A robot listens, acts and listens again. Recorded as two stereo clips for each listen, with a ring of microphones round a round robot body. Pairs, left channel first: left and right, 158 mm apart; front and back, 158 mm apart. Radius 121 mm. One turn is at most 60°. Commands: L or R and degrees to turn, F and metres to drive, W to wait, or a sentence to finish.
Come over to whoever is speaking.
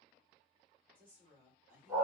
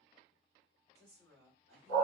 R60
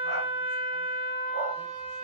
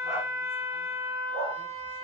R60
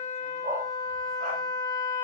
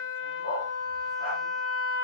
R10
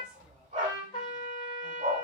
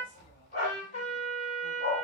Facing where the woman speaking came from. I can't hear it now. I did not reach it.